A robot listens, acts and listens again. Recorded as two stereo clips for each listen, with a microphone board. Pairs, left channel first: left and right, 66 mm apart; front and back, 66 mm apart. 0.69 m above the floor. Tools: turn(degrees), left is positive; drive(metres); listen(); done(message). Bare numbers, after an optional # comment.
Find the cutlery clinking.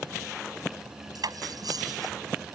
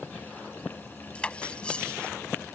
# The cutlery clinking: 75° right.
turn(-75)
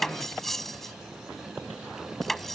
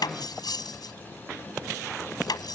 done("Found it: cutlery clinking, straight ahead.")